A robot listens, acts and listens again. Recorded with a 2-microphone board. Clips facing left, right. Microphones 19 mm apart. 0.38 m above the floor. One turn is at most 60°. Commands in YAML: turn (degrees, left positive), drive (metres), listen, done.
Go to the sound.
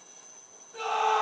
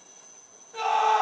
turn: -35
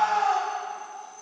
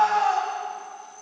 turn: -10
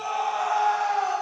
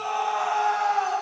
drive: 1.0
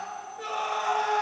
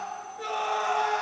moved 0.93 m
turn: 10
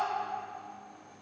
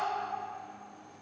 listen: true
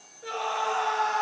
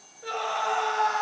drive: 1.0
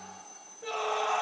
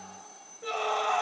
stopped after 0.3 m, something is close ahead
done: "I am next to the scream."